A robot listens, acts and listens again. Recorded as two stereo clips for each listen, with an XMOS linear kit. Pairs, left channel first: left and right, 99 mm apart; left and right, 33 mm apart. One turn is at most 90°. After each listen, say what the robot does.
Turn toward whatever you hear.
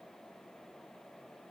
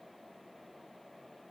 Keep listening.
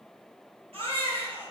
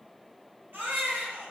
Turn 75° right.
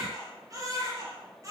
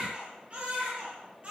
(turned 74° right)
Turn 35° right.
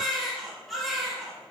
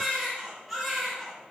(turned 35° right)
Found it: a baby crying, straight ahead.